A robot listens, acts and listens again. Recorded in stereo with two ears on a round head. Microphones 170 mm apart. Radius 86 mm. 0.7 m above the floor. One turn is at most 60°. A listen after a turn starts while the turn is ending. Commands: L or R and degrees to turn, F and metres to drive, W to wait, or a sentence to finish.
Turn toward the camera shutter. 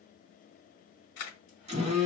L60
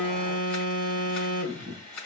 Found it: a camera shutter, straight ahead.